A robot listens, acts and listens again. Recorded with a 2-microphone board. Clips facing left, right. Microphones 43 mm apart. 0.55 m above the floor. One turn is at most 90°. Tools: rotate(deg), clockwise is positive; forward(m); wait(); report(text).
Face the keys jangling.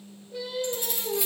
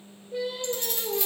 rotate(-30)
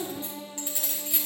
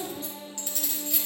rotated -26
rotate(-30)
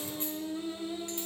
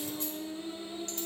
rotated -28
wait()
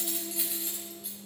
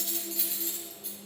rotate(-30)
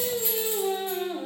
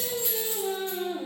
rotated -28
rotate(-20)
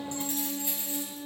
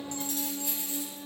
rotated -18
rotate(-90)
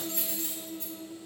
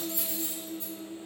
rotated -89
rotate(-60)
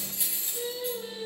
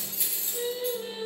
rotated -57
report("Facing the keys jangling.")